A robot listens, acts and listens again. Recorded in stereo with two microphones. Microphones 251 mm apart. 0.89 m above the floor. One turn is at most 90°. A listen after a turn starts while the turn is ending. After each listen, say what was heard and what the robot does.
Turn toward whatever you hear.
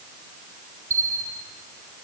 The bell: about 60° right or 120° right. Turn 60° right.
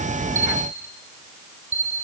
So it is at 55° right. Turn 55° right.
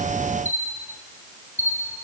The bell is now 10° right. Turn 10° right.
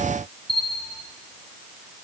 Found it: a bell, straight ahead.